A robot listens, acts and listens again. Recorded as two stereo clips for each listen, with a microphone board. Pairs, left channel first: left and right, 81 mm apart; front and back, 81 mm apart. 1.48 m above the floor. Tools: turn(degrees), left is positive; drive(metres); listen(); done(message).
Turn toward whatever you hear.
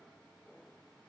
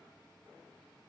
listen()
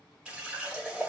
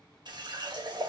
turn(degrees=-165)
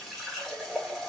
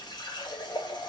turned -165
done("Facing the running tap.")